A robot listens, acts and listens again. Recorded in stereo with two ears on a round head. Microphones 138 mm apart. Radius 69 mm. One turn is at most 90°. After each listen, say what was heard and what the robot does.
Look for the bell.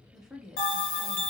The bell: about 60° left or 120° left. Turn 60° left.
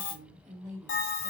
So it is at 60° left. Turn 60° left.
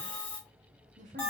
The bell is now 10° left. Turn 10° left.
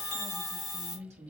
Found it: a bell, straight ahead.